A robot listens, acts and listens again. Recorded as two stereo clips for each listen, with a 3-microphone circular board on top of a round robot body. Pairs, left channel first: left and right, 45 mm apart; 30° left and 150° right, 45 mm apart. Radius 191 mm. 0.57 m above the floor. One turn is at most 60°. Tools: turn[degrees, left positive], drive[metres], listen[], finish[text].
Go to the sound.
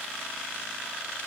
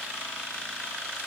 Action: listen[]
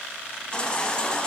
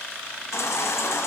Thought: The baby crying: 20° left.
Action: turn[20]
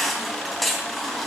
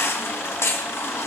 Action: drive[1.0]
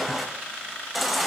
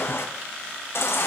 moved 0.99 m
Action: drive[1.0]
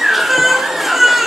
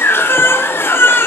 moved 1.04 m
Action: drive[1.0]
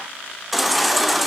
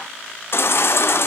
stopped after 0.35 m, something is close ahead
Action: finish[I am next to the baby crying.]